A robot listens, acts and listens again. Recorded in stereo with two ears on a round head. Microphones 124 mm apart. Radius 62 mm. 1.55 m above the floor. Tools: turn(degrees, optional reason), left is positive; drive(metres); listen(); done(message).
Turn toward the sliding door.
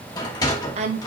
turn(degrees=25, reason="The sliding door: about 25° left or 155° left.")
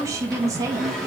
done("Facing the sliding door, 2 to 4 m away.")